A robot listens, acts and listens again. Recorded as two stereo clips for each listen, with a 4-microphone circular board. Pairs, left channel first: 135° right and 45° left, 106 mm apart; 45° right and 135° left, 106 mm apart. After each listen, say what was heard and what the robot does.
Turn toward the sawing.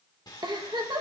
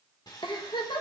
The sawing: 90° right. Turn 90° right.
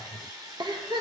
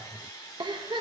Facing the sawing, 1 to 2 m away.